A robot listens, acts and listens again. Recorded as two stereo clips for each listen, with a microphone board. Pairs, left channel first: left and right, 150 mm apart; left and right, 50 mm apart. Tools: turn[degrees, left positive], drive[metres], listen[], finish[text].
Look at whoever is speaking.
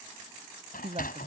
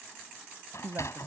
Thought: The woman speaking: about 40° right or 140° right.
Action: turn[-40]
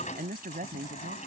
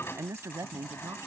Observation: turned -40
Thought: So it is at 110° right.
Action: turn[-110]
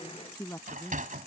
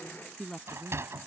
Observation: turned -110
Thought: The woman speaking is now 20° left.
Action: turn[20]
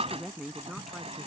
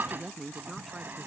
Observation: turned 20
Action: finish[Found it: a woman speaking, straight ahead.]